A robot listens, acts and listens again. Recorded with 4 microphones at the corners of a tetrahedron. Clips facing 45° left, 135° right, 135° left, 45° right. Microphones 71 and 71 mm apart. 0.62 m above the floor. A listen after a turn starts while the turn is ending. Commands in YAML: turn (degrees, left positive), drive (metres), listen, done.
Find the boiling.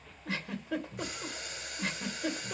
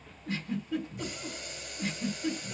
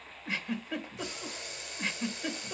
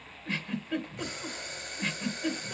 done: "Facing the boiling, 2 to 4 m away."